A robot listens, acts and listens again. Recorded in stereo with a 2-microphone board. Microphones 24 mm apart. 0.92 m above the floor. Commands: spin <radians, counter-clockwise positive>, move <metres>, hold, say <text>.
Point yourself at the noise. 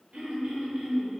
spin -1.13
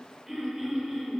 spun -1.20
spin -0.35
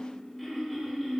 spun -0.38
say Facing the throat clearing, under 1 m away.